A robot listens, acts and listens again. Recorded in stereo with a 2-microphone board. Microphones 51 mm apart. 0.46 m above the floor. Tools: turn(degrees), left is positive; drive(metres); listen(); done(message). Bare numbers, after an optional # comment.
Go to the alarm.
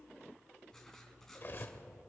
listen()
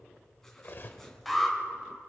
turn(30)
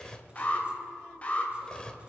# So it is at 150° left.
turn(150)
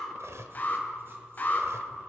# The alarm is now 40° left.
turn(40)
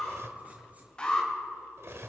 # The alarm is now 20° left.
turn(20)
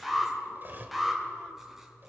drive(1.0)
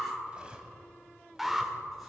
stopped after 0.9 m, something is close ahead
done("Arrived at the alarm, straight ahead.")